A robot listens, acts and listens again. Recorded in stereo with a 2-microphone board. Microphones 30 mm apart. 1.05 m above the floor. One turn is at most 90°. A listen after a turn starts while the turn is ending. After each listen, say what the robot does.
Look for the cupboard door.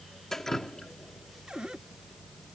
Turn 25° right.
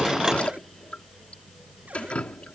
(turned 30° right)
Keep listening.
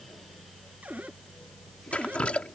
Turn 90° right.
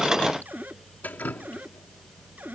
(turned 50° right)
Turn 75° right.
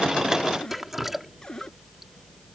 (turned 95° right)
Turn 20° left.
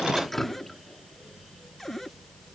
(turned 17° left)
Facing the cupboard door.